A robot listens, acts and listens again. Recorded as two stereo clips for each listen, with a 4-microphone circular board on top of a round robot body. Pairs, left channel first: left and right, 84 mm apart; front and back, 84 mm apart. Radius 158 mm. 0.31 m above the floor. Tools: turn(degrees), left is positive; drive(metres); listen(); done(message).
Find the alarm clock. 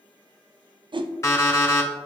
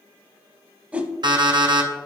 turn(degrees=145)
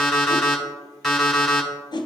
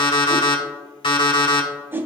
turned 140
done("Found it: an alarm clock, straight ahead, 1 to 2 m away.")